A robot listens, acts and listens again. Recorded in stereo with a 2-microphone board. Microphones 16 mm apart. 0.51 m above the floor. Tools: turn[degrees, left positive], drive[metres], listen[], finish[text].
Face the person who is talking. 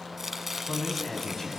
Thought: The man speaking: about 20° left or 160° left.
Action: turn[20]
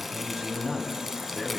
Thought: So it is at 140° left.
Action: turn[140]
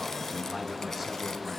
Action: finish[Found it: a man speaking, straight ahead, 2 to 4 m away.]